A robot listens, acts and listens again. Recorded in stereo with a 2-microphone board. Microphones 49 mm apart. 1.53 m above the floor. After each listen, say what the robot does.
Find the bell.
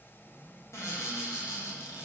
Keep listening.
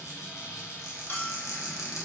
Turn 45° left.
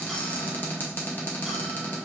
Keep listening.
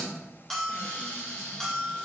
Turn 10° left.
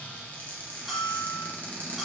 Facing the bell.